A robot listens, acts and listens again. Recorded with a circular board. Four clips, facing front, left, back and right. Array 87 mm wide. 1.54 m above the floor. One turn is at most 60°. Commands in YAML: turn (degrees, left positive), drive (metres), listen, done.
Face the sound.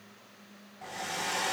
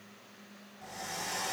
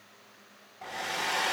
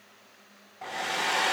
turn: -60
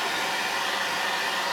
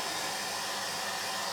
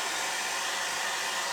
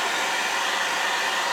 turn: -60
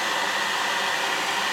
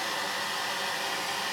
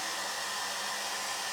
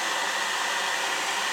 turn: -20
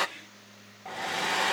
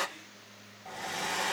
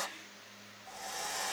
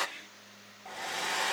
done: "Found it: a hair dryer, straight ahead."